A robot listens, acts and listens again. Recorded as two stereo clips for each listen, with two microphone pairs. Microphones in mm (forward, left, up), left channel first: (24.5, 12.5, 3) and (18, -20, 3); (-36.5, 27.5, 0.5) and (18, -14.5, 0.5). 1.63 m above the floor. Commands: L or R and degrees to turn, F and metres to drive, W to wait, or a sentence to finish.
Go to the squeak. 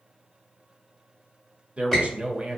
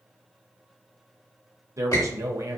L165
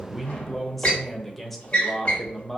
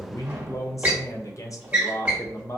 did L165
L25
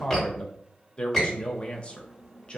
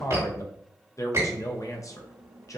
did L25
R10
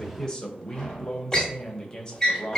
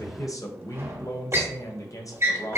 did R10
F1.0
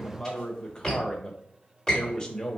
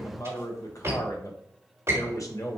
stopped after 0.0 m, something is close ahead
Blocked. The squeak is further on, straight ahead.